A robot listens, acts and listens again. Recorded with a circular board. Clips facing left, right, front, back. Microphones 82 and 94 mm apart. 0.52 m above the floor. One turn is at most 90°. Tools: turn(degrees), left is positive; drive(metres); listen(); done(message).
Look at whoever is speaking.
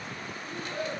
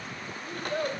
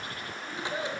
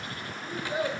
turn(degrees=-90)
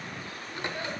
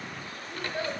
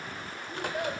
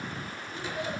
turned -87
turn(degrees=-25)
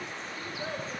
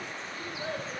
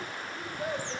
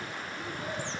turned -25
done("Facing the child speaking, 1 to 2 m away.")